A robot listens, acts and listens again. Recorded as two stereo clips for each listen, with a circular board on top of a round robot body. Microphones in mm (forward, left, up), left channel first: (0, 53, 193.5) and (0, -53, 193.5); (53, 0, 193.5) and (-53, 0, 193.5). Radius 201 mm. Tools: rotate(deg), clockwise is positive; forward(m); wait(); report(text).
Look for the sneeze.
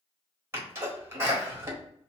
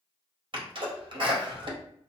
rotate(155)
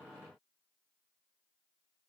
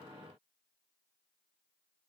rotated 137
rotate(15)
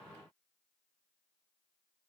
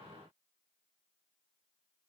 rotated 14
report("Facing where the sneeze came from. I can't hear it now.")